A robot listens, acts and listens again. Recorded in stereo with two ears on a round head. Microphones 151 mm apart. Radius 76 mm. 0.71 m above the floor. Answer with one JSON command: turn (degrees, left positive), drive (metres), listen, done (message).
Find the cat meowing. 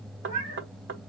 {"turn": -35}
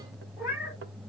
{"turn": -10}
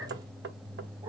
{"listen": true}
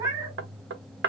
{"turn": -20}
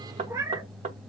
{"turn": -15}
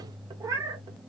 {"turn": -20}
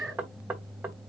{"done": "Facing the cat meowing, 1 to 2 m away."}